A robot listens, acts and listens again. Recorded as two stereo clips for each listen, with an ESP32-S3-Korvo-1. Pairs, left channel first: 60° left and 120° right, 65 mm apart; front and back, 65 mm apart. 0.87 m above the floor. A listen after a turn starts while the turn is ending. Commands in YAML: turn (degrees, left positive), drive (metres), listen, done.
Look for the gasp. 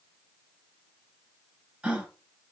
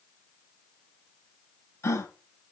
turn: -45
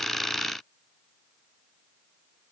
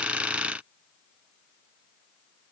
done: "I heard a gasp from this way, but can't make it out now."